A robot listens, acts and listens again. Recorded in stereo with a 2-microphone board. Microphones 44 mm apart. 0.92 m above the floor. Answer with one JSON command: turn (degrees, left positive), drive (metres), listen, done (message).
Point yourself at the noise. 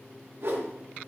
{"turn": -60}
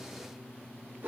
{"turn": -55}
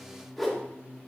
{"done": "Found it: a whoosh, straight ahead, 1 to 2 m away."}